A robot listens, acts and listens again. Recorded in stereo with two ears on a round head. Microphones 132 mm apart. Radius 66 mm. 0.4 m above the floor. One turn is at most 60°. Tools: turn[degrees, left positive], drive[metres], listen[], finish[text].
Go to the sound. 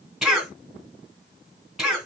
Action: turn[30]
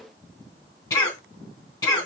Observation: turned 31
Thought: So it is at 150° left.
Action: turn[60]
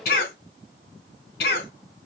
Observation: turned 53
Thought: The cough is now 95° left.
Action: turn[60]
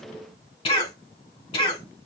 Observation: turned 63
Thought: The cough is now 35° left.
Action: turn[35]
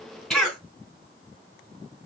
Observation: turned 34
Action: drive[1.0]
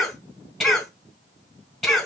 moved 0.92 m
Action: drive[1.0]
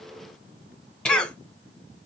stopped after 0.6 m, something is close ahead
Action: finish[I am next to the cough.]